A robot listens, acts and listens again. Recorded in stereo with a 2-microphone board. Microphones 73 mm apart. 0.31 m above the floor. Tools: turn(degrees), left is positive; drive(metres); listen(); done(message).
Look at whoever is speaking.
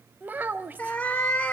turn(degrees=-25)
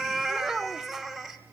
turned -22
done("Facing the child speaking.")